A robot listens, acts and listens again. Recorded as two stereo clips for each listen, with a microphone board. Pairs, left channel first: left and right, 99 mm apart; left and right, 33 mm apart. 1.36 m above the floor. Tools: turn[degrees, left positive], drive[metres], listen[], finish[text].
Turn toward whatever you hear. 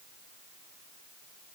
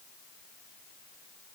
Action: listen[]
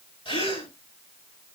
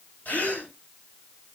Thought: The gasp: about 65° left or 115° left.
Action: turn[65]
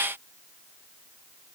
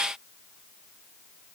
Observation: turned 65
Action: listen[]
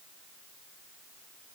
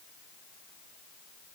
Action: finish[I heard a gasp, but can't make it out now. It was about straight ahead or 50° left.]